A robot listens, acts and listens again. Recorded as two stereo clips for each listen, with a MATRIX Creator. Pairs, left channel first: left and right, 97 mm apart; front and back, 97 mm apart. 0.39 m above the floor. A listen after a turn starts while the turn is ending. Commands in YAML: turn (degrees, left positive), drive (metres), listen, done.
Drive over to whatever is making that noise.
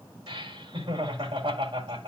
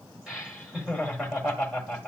turn: -90
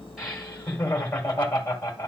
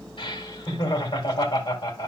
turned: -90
turn: 20
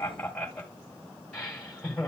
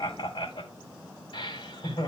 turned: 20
drive: 1.0
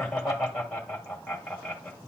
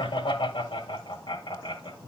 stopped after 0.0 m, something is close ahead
done: "Something is in my way. I am facing the laughter but have not reached it."